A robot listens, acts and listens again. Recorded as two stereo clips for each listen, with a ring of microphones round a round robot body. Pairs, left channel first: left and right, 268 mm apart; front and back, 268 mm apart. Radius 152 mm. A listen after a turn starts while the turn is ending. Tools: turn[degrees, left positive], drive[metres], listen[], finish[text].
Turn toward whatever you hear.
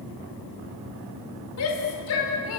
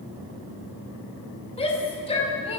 Thought: The shout: 65° left.
Action: turn[65]
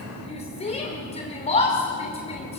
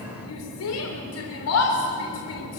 Thought: The shout is now 25° left.
Action: turn[25]
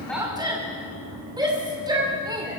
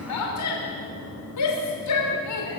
Thought: The shout is now 15° right.
Action: turn[-15]
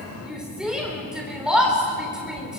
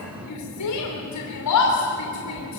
Action: finish[Found it: a shout, straight ahead, 2 to 4 m away.]